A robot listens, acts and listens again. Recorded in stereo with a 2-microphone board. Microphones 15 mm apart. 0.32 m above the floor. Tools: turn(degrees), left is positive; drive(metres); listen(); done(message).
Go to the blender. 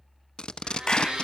turn(degrees=-60)
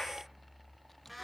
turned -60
drive(metres=1.0)
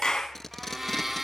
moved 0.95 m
turn(degrees=-15)
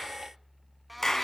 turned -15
drive(metres=1.0)
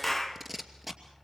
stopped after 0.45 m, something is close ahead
listen()
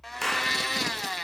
turn(degrees=10)
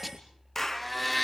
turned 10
done("I am next to the blender.")